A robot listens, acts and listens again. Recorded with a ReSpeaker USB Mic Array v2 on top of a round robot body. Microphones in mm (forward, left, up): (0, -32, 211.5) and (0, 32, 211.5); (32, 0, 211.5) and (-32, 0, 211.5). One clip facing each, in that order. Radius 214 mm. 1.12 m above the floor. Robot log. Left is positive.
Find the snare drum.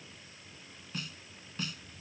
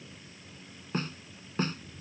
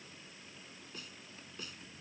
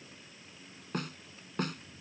note: The snare drum: 145° left.
cmd yaw +145
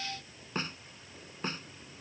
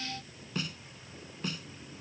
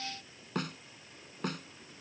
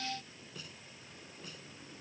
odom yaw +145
note: The snare drum is now 30° right.
cmd yaw -30
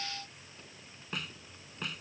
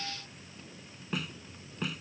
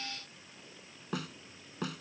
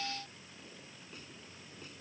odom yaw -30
end: Found it: a snare drum, straight ahead.